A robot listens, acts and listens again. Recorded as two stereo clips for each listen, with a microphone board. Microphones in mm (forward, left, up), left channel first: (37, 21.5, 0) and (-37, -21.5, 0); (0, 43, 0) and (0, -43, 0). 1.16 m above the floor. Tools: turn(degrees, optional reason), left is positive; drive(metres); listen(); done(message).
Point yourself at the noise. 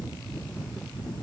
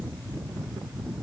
listen()
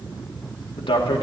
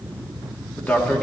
turn(degrees=20, reason="The man speaking: 20° left.")
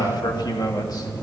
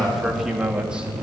turn(degrees=-15, reason="The man speaking is now 15° right.")
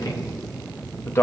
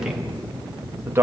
turn(degrees=-30, reason="The man speaking is now 30° right.")
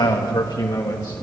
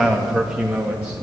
turn(degrees=-15, reason="The man speaking is now 15° right.")
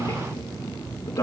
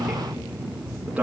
turn(degrees=-10, reason="The man speaking is now 10° right.")
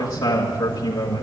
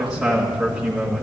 done("Found it: a man speaking, straight ahead.")